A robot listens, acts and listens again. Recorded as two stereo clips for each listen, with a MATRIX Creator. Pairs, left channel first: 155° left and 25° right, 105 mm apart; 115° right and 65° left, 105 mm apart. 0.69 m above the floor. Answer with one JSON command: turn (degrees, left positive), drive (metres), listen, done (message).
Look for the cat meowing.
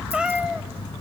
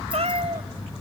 {"turn": 55}
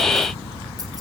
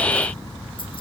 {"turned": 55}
{"listen": true}
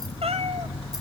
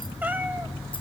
{"done": "Facing the cat meowing."}